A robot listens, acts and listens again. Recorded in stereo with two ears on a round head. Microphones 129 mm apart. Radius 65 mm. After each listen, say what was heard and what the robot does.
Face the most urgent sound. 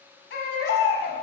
Turn 90° left.
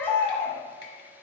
So it is at 15° left. Turn 15° left.
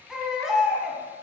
Facing the baby crying, 1 to 2 m away.